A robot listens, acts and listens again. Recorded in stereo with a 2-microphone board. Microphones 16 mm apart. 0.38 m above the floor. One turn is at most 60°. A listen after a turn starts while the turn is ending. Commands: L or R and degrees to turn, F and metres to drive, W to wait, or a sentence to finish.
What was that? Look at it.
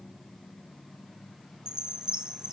R45
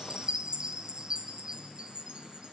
R60
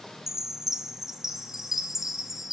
R30
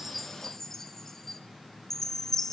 L20
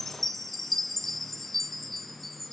L10
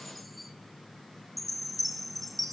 Found it: a chime, straight ahead, 1 to 2 m away.